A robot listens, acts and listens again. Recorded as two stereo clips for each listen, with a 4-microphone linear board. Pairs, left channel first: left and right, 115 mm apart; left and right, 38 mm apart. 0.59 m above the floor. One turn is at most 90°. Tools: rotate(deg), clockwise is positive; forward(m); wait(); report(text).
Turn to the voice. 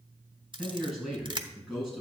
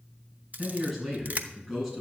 rotate(30)
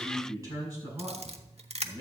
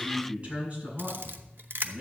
rotate(90)
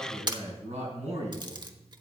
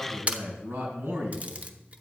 rotate(80)
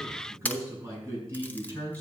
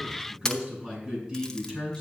rotate(25)
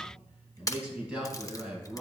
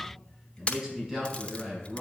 rotate(10)
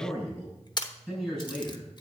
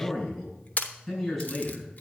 report("Facing the man speaking.")